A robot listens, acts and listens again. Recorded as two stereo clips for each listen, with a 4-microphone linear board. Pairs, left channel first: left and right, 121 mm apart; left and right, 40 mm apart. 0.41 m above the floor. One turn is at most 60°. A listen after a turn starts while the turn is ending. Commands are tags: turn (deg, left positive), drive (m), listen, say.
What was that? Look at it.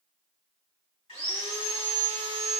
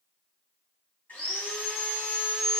<turn deg="50"/>
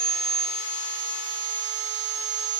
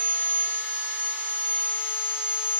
<turn deg="60"/>
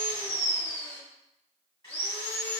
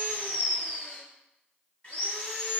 <turn deg="30"/>
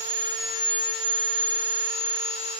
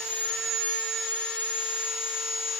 <say>Found it: sawing, straight ahead, 1 to 2 m away.</say>